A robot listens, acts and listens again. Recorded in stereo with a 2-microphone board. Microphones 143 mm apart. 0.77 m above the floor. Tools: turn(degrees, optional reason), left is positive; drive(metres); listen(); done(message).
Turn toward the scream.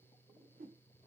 listen()
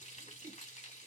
listen()
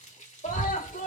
turn(degrees=70, reason="The scream: about 70° left or 110° left.")
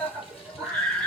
done("Found it: a scream, straight ahead, 2 to 4 m away.")